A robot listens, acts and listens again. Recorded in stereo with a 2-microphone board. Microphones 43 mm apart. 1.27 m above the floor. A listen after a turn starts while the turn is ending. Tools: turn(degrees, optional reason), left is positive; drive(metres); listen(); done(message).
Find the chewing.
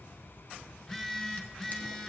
listen()
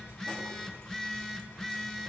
listen()
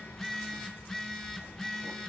done("I can't make out chewing, only a phone buzzing.")